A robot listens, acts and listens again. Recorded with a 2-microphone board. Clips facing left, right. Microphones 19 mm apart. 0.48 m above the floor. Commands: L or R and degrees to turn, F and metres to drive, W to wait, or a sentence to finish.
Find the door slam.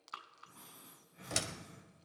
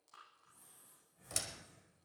L25
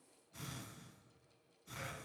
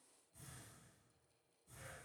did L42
W
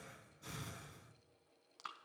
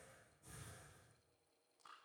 I heard a door slam, but can't make it out now. It was about 20° right or 115° left.